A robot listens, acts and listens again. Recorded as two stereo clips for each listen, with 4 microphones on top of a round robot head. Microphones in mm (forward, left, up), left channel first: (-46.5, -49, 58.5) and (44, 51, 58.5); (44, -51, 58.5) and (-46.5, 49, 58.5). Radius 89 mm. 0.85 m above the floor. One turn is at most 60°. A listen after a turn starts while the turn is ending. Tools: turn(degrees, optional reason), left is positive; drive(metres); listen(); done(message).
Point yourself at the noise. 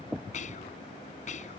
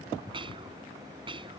turn(degrees=-60, reason="The whispering: 170° right.")
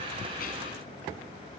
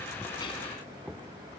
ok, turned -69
turn(degrees=-60, reason="Nothing new. It was at 100° right.")
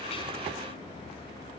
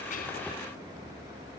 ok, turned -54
turn(degrees=-50, reason="Nothing new. It was at 50° right.")
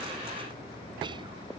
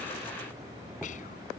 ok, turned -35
turn(degrees=-15, reason="Nothing new. It was at 15° right.")
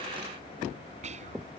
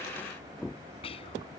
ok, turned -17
done("Found it: whispering, straight ahead.")